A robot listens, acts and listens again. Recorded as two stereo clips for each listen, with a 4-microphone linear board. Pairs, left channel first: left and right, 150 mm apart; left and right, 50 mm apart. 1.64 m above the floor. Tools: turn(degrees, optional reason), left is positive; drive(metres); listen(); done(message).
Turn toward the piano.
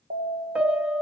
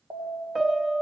turn(degrees=-30)
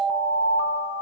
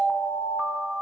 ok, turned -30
listen()
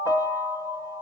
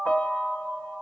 turn(degrees=25, reason="So it is at 25° left.")
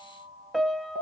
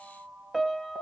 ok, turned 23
done("Facing the piano, under 1 m away.")